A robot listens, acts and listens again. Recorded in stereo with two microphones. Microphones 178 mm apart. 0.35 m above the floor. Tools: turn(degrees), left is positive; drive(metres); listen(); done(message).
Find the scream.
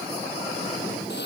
listen()
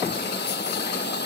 listen()
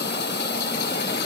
done("I can't make out a scream to turn to.")